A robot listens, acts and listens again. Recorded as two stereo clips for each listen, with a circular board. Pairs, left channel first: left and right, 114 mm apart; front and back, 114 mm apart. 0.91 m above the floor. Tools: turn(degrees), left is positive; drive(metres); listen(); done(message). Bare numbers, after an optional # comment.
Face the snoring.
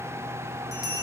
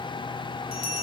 listen()
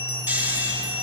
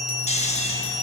# The snoring: 15° right.
turn(-15)
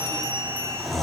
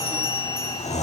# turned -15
done("Facing the snoring.")